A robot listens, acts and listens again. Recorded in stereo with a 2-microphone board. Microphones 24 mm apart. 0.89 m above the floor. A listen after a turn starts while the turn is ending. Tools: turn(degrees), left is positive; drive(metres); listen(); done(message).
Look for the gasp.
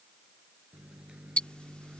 listen()
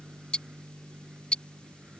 listen()
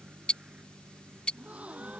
turn(degrees=-90)
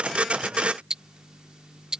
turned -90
done("Facing where the gasp came from. I can't hear it now.")